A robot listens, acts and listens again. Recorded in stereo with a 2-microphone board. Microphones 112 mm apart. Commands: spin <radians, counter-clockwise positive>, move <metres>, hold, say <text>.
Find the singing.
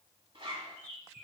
hold
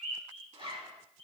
hold
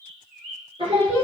spin -0.87
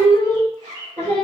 spin -1.31
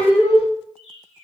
spin -0.26
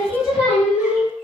say Facing the singing.